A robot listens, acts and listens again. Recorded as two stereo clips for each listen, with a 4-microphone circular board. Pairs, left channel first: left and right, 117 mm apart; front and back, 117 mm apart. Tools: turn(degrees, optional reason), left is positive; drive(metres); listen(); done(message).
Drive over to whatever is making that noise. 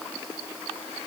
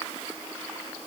listen()
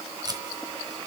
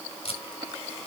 turn(degrees=-35, reason="The tape being pulled: 35° right.")
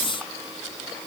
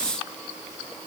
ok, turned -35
listen()
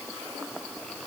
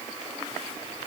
listen()
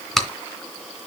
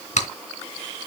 drive(metres=1.0)
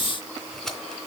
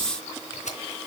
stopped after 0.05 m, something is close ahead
done("Blocked. The tape being pulled is further on, straight ahead.")